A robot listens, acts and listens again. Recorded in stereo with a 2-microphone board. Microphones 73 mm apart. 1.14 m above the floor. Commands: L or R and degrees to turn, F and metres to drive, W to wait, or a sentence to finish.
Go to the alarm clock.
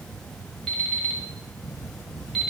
L30
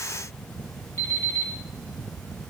L145
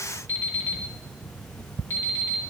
L35
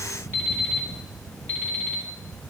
L25
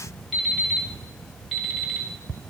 F1.0
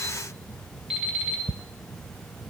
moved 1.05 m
R10
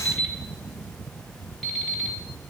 F1.0
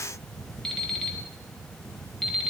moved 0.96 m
F1.0
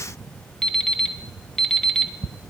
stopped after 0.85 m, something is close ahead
Arrived at the alarm clock, straight ahead.